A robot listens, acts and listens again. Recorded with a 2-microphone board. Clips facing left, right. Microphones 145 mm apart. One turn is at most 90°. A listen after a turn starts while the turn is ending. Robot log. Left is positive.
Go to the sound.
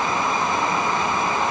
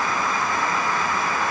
cmd idle
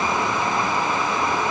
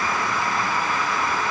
cmd idle
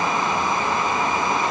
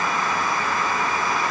end: I can't make out anything to turn to.